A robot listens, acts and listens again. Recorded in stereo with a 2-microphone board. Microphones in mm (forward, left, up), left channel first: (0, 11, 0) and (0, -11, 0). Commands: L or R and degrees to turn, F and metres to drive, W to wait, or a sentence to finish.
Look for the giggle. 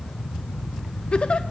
L45
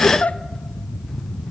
L85
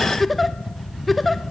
Found it: a giggle, straight ahead.